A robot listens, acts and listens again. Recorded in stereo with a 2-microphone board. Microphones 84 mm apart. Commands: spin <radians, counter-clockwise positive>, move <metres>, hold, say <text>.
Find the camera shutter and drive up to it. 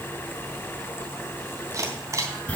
spin -0.61
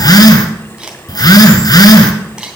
move 1.0
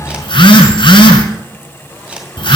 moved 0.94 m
spin -0.26
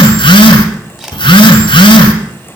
move 1.0
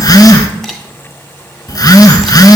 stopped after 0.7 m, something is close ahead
say Arrived at the camera shutter, straight ahead.